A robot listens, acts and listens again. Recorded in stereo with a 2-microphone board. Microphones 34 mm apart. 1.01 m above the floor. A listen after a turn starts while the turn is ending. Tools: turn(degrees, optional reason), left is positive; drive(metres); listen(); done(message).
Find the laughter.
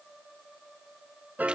listen()
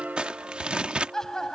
turn(degrees=15, reason="The laughter: about 15° left or 165° left.")
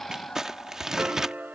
turn(degrees=145, reason="So it is at 145° left.")
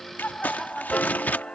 turn(degrees=10, reason="The laughter is now 10° left.")
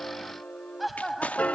done("Facing the laughter.")